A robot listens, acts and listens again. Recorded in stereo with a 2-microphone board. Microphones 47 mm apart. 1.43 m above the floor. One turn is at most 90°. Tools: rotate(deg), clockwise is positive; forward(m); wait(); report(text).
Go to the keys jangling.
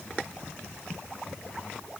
wait()
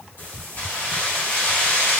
rotate(-45)
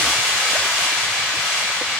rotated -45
forward(1.0)
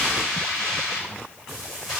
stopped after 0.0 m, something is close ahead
report("Blocked. The keys jangling is further on, straight ahead.")